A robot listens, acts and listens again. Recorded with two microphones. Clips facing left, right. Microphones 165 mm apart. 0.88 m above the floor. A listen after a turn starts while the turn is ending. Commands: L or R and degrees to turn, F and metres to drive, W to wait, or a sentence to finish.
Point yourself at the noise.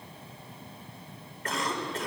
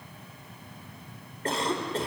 R30
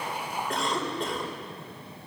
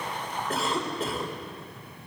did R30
Facing the cough.